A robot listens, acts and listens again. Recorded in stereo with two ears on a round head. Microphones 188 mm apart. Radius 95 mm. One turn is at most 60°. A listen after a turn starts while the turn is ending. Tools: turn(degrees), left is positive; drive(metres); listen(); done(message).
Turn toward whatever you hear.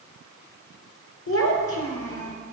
turn(degrees=60)
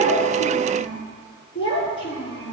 turn(degrees=25)
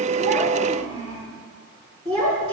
turn(degrees=-20)
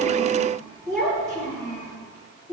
done("Found it: a child speaking, straight ahead, over 4 m away.")